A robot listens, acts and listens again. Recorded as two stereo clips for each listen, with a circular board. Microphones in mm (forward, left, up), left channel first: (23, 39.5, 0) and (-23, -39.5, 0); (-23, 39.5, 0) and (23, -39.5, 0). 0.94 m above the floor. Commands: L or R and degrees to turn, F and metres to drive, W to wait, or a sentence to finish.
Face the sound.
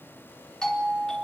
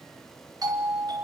R20
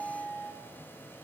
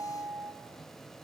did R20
Found it: a doorbell, straight ahead.